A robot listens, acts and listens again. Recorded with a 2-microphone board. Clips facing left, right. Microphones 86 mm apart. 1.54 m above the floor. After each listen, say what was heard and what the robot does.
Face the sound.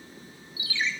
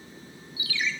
The ringtone: about 25° left or 155° left. Turn 25° left.
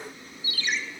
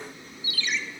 So it is at 130° left. Turn 130° left.
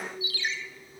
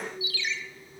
The ringtone is now 50° left. Turn 50° left.
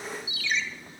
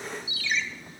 Facing the ringtone, under 1 m away.